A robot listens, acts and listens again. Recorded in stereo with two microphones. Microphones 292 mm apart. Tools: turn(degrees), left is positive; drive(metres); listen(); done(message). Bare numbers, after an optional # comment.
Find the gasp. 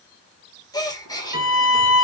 turn(30)
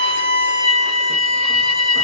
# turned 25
listen()
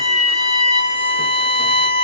done("I heard a gasp, but can't make it out now. It was about 10° right or 140° left.")